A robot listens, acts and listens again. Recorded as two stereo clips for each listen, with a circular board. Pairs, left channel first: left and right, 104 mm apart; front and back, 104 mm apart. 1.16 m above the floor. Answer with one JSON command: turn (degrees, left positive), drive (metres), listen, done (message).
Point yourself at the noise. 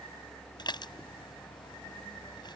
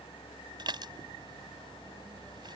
{"turn": 135}
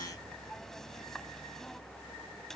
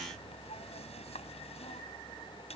{"listen": true}
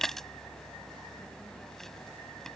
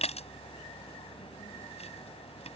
{"done": "Facing the dishes clattering."}